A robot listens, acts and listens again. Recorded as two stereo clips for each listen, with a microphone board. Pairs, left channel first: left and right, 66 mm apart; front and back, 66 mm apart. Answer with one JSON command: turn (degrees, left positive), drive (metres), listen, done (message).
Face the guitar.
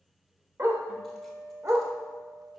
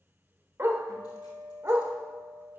{"turn": -165}
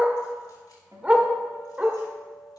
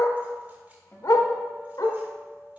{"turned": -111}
{"turn": -55}
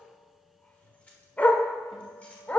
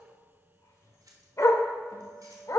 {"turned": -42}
{"turn": -10}
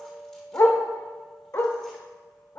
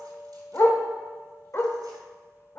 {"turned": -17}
{"done": "Found it: a guitar, straight ahead."}